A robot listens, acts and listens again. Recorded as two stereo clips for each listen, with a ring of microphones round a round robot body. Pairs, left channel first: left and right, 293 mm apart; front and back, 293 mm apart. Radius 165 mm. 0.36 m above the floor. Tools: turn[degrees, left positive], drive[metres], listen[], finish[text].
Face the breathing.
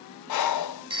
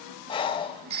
Thought: The breathing: 75° left.
Action: turn[75]
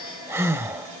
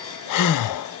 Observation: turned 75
Thought: The breathing is now 10° right.
Action: turn[-10]
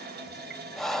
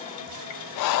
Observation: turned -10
Action: finish[Found it: breathing, straight ahead, under 1 m away.]